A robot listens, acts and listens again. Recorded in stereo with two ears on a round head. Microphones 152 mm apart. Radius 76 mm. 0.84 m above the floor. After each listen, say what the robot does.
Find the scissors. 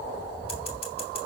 Keep listening.
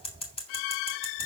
Turn 35° left.
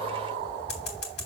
Turn 110° left.
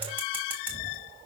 Keep listening.
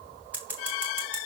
Turn 10° right.
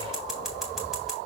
Facing the scissors, 2 to 4 m away.